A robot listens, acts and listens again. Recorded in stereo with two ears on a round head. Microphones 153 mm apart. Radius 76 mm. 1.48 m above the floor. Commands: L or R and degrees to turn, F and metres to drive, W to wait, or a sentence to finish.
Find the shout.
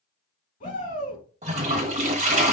L45
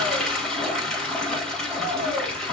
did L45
W
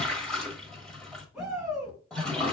Facing the shout, 2 to 4 m away.